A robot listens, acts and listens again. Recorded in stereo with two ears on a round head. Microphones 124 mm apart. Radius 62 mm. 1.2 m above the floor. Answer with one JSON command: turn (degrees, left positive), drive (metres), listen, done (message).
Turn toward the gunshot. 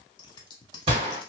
{"turn": -40}
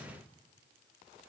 {"listen": true}
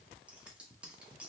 {"done": "I heard a gunshot, but can't make it out now. It was about straight ahead or 100° right."}